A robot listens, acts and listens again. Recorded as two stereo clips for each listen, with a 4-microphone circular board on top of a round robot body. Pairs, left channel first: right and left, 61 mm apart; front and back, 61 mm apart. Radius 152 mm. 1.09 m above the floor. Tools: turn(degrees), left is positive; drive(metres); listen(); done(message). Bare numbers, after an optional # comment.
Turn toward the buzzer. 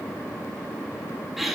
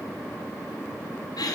listen()
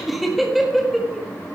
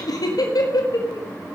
listen()
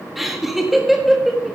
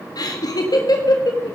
done("I can't make out a buzzer, only laughter.")